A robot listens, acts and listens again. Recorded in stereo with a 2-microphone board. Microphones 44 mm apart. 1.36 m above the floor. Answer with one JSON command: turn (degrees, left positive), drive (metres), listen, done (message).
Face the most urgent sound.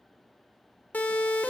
{"turn": 40}
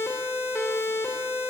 {"turn": 105}
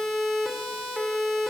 {"done": "Found it: a siren, straight ahead."}